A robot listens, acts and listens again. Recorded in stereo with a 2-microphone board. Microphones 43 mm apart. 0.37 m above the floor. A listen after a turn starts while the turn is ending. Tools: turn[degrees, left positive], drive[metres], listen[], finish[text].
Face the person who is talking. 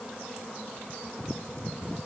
Action: listen[]
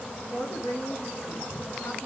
Thought: The woman speaking: about 55° left or 125° left.
Action: turn[55]
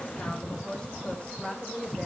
Thought: So it is at 25° left.
Action: turn[25]
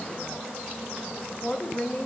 Thought: The woman speaking is now 35° left.
Action: turn[35]
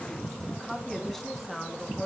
Thought: The woman speaking is now 10° left.
Action: turn[10]
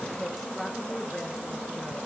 Action: finish[Facing the woman speaking.]